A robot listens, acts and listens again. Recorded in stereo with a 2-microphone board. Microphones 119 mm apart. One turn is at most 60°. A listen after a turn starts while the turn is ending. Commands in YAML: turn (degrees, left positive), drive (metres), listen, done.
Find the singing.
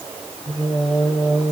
turn: 30
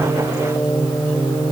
turn: 60
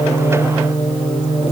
turn: 60
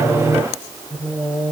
turn: 30
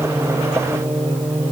turn: -20
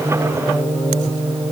done: "Found it: singing, straight ahead, 2 to 4 m away."